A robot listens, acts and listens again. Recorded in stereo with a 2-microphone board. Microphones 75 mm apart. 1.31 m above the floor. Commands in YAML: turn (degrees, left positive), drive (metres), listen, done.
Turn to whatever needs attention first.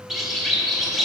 listen: true
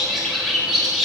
listen: true
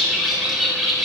done: "I can't make out anything urgent to turn to."